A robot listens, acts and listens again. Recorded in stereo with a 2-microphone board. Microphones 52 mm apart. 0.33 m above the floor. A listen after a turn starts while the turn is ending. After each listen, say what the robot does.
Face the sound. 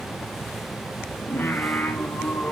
Turn 30° left.
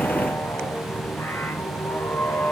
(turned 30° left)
Turn 35° left.
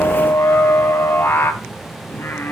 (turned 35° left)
Turn 135° left.
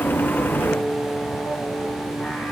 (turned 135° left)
Turn 20° left.
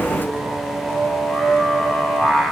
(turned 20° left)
Turn 10° left.
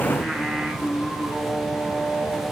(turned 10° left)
Found it: singing, straight ahead.